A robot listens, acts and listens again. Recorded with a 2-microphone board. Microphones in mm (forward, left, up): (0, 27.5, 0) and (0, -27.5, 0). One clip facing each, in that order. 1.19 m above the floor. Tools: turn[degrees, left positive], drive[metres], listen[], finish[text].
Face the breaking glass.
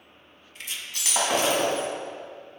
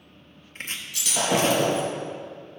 Thought: The breaking glass: about 50° left or 130° left.
Action: turn[50]
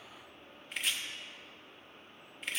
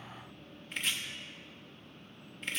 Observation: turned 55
Action: listen[]
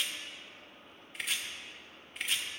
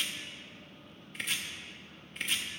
Action: finish[I heard breaking glass, but can't make it out now. It was about 5° right or 75° left.]